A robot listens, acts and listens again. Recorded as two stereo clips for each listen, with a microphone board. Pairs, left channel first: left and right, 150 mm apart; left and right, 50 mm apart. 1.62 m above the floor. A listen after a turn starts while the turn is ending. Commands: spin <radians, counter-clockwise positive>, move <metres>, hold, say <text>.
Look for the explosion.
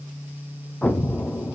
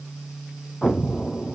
spin 0.52
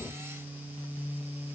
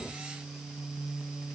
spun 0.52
hold
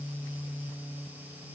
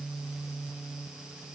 say I heard an explosion, but can't make it out now. It was about 25° right or 145° left.